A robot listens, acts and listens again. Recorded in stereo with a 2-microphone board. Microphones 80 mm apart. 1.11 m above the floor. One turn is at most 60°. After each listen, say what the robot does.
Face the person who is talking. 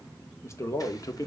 Turn 45° left.
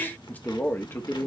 Turn 35° left.
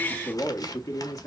Turn 40° left.
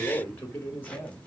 Turn 25° left.
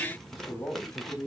Turn 15° left.
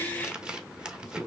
Facing the man speaking.